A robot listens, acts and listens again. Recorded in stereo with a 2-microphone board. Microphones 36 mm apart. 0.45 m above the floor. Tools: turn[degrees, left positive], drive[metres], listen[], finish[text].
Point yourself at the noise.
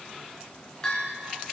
Thought: The bell: about 25° left or 155° left.
Action: turn[25]
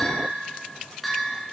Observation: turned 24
Action: finish[Facing the bell, 2 to 4 m away.]